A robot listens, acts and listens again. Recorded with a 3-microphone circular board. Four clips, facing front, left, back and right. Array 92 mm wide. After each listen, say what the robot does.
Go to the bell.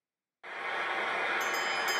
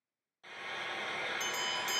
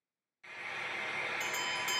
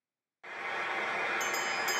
Turn 155° right.
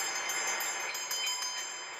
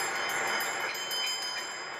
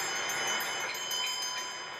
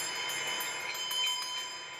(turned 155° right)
Turn 40° right.
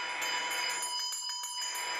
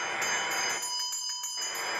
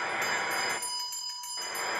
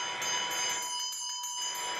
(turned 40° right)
Turn 20° left.
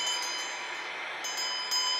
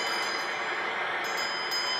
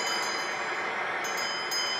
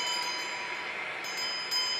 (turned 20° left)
Drive 1.0 m forward.
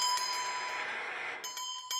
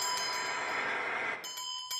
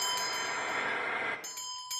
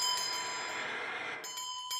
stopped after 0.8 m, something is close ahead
Blocked. The bell is further on, straight ahead.